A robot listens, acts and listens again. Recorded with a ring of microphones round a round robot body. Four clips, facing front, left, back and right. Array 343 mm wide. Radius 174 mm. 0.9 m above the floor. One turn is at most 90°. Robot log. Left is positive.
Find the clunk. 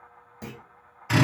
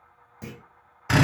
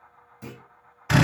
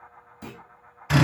note: The clunk: 25° left.
cmd yaw +25
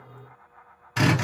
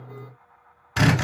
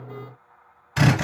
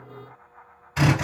end: I heard a clunk from this way, but can't make it out now.